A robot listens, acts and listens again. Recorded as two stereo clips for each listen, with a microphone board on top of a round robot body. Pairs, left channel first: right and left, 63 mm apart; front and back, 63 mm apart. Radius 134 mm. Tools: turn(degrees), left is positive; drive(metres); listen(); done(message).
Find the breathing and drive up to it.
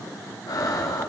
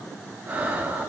turn(degrees=-115)
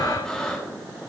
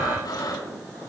turn(degrees=-10)
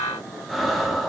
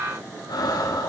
drive(metres=1.0)
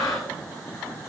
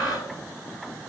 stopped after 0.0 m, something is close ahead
done("Blocked. The breathing is further on, straight ahead.")